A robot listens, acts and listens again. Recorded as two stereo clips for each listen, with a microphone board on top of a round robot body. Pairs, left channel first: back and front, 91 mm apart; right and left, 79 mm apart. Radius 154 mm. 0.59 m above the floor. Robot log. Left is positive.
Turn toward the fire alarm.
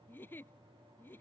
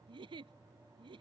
cmd idle
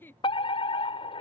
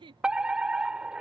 note: The fire alarm: 170° left.
cmd yaw +170
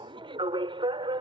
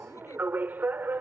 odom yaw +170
note: The fire alarm is now 25° left.
cmd yaw +25
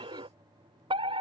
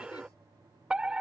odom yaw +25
note: The fire alarm is now 10° left.
cmd yaw +10
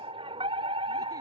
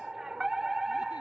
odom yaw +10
end: Facing the fire alarm.